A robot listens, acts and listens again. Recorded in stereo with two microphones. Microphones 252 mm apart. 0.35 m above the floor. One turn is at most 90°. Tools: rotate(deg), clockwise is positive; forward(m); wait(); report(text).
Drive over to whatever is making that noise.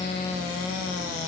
wait()
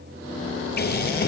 rotate(-40)
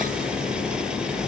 forward(1.0)
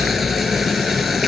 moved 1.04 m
forward(1.0)
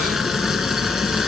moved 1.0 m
forward(1.0)
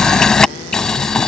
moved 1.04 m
forward(1.0)
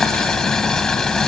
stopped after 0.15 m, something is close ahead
report("I am next to the boiling.")